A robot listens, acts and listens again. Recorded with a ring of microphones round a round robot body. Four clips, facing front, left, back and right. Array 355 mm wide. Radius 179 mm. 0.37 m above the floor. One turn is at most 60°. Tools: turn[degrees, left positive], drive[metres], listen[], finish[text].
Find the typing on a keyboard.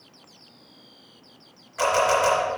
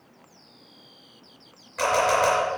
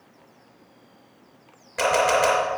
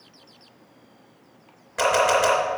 Action: listen[]
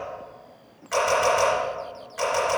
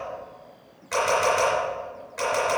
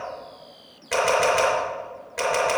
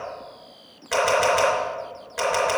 Action: listen[]
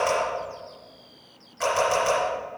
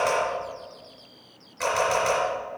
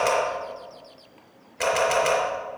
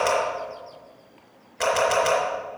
Action: finish[I can't make out typing on a keyboard to turn to.]